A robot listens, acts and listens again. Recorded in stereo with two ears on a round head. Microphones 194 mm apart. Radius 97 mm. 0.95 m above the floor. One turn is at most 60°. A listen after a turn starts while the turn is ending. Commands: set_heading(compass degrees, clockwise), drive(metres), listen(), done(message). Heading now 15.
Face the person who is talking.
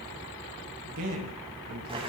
set_heading(75)
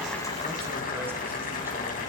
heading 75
listen()
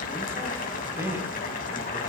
set_heading(85)
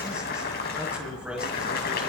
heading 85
done("Found it: a man speaking, straight ahead, over 4 m away.")